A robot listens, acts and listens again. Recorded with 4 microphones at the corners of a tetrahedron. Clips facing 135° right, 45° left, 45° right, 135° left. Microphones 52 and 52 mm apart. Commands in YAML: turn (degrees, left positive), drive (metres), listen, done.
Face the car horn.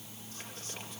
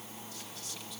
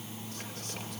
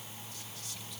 listen: true
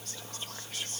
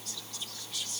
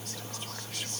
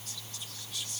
listen: true
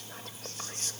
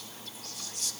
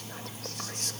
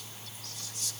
done: "I can't make out a car horn, only whispering."